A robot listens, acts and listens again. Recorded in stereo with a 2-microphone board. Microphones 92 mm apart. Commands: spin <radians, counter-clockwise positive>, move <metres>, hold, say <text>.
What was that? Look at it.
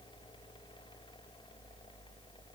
hold
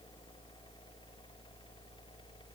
hold
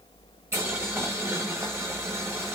spin -0.44
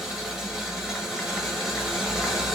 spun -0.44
say Facing the boiling.